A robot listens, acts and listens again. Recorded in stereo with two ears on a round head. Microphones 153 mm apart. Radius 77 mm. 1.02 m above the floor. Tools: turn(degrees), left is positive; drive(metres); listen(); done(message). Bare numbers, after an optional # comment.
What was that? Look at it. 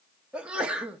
turn(-30)
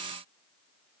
listen()
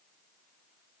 done("I heard a sneeze, but can't make it out now. It was about 25° left or 145° right.")